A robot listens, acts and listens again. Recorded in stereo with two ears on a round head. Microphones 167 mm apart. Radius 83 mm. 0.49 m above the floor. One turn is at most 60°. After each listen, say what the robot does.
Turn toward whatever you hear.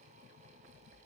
Keep listening.
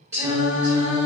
Turn 30° right.
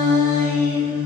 Turn 30° right.
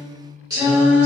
Turn 30° right.
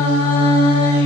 Turn 60° right.
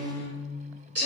Turn 60° right.
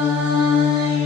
Turn 30° right.
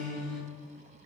Facing the singing.